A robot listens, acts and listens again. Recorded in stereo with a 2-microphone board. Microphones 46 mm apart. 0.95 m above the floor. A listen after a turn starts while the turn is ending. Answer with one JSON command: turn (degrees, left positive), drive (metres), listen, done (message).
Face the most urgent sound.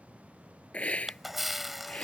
{"listen": true}
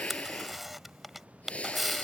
{"listen": true}
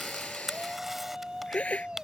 {"turn": -15}
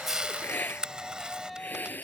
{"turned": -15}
{"done": "Found it: a shout, straight ahead."}